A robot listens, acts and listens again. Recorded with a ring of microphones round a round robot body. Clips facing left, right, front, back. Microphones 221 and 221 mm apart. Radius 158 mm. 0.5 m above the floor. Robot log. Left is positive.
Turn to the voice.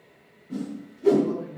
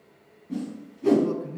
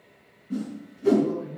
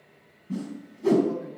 note: The man speaking: 100° right.
cmd yaw -100
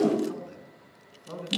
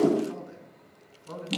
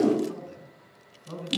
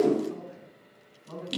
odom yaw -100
note: The man speaking is now 20° right.
cmd yaw -20
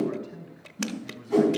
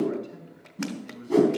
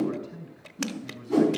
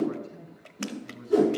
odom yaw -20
end: Found it: a man speaking, straight ahead.